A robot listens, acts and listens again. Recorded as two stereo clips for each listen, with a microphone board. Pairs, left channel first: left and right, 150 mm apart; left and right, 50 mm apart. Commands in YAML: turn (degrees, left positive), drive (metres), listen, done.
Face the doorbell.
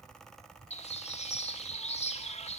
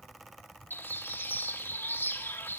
listen: true
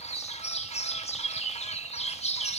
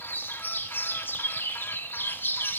listen: true
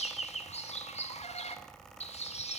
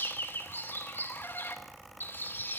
done: "I can't make out a doorbell to turn to."